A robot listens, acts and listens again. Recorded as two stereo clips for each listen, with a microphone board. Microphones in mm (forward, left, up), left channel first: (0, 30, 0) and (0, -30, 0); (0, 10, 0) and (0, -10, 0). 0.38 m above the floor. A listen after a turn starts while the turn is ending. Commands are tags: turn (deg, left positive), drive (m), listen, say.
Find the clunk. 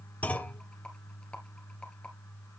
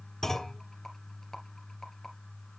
<turn deg="25"/>
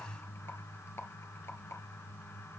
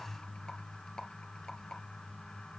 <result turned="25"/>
<listen/>
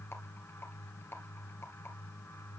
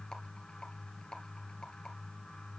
<say>I heard a clunk, but can't make it out now. It was about straight ahead or 130° left.</say>